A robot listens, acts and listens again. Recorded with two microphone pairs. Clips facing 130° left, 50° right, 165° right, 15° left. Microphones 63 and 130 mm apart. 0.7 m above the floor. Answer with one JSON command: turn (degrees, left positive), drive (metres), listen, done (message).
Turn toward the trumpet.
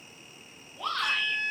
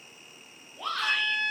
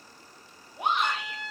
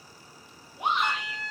{"turn": -85}
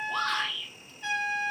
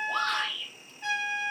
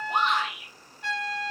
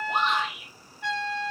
{"done": "Facing the trumpet, 1 to 2 m away."}